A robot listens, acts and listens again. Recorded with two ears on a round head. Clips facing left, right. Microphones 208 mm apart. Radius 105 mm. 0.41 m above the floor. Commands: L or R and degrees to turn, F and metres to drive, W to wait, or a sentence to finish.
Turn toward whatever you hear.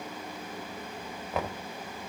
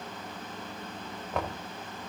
L30
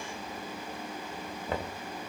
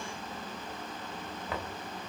L150
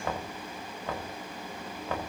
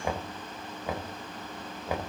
R10
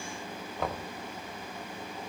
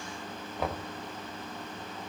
Facing the knocking.